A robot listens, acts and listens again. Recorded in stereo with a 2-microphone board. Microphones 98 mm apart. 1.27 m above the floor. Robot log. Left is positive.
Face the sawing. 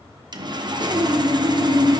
note: The sawing: about 50° right or 130° right.
cmd yaw -50
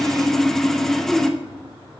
end: Found it: sawing, straight ahead.